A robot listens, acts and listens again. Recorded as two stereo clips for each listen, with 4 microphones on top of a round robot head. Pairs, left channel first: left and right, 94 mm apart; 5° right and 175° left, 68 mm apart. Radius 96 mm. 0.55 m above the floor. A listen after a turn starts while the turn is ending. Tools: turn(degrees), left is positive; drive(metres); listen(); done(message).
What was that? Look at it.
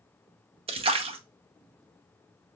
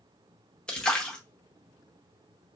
turn(degrees=-85)
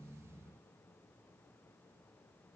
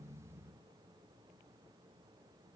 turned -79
done("Facing where the splash came from. I can't hear it now.")